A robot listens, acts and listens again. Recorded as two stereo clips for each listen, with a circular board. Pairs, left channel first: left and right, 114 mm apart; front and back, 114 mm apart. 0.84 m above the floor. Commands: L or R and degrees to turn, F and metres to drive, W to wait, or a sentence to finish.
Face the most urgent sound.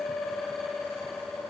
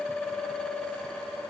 W
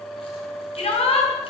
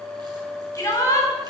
L60
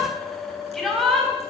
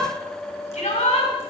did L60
Facing the shout, over 4 m away.